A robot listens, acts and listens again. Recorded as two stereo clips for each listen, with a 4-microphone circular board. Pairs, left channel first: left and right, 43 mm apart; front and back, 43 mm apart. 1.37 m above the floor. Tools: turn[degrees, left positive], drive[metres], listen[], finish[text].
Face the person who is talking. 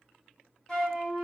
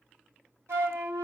Action: listen[]
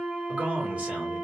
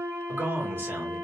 Thought: The man speaking: 145° right.
Action: turn[-145]
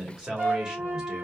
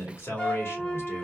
Thought: The man speaking is now 15° right.
Action: turn[-15]
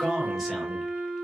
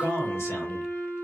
Action: finish[Facing the man speaking.]